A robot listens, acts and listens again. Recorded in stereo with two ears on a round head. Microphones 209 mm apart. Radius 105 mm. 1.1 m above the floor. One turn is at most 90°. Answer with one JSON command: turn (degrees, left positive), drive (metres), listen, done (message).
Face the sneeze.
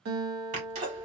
{"turn": -35}
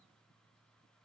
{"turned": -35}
{"listen": true}
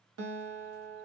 {"done": "I heard a sneeze, but can't make it out now. It was about straight ahead or 110° right."}